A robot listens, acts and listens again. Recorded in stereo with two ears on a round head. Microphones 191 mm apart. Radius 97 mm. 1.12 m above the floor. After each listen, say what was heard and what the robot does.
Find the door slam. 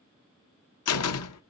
Turn 90° left.
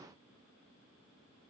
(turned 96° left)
Facing where the door slam came from. I can't hear it now.